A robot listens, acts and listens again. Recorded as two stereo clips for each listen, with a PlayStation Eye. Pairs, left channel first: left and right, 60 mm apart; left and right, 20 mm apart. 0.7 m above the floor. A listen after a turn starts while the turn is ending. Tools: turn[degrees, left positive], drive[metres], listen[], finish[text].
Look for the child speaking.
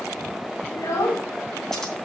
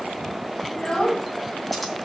Thought: The child speaking: about 60° left or 120° left.
Action: turn[60]
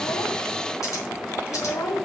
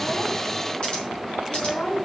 Thought: So it is at 65° left.
Action: turn[65]
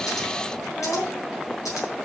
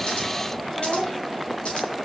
Thought: The child speaking is now 15° left.
Action: turn[15]
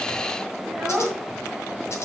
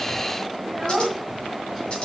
Action: finish[Facing the child speaking, 1 to 2 m away.]